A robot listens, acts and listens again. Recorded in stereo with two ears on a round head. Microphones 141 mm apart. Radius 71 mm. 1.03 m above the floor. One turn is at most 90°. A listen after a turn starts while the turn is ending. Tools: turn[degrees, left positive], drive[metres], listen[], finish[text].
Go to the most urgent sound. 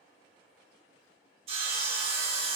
Action: listen[]
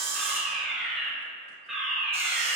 Action: turn[30]
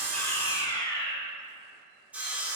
Thought: So it is at 150° left.
Action: turn[90]
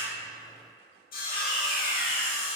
Thought: The fire alarm is now 75° left.
Action: turn[75]
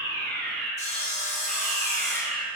Action: drive[1.0]
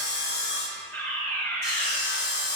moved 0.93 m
Thought: The fire alarm is now 20° left.
Action: turn[20]
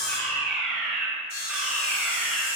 Action: drive[1.0]
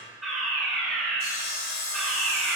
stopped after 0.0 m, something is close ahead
Action: finish[Arrived at the fire alarm, straight ahead.]